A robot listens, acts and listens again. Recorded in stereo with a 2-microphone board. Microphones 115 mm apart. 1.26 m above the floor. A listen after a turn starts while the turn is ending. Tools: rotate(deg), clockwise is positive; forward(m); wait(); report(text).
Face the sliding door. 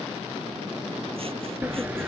rotate(30)
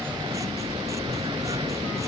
rotate(135)
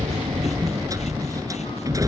rotate(30)
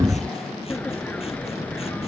rotate(-10)
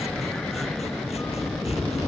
report("Facing the sliding door.")